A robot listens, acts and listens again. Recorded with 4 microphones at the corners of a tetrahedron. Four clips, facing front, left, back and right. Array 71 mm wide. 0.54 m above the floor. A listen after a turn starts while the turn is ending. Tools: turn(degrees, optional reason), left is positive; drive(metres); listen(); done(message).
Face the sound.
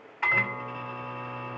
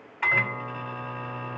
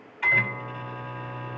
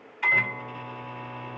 turn(degrees=65, reason="The microwave: 65° left.")
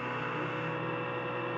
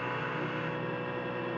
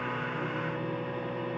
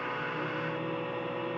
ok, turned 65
turn(degrees=20, reason="The microwave is now 20° left.")
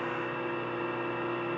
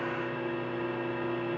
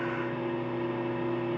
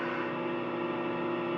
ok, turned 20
done("Facing the microwave, 1 to 2 m away.")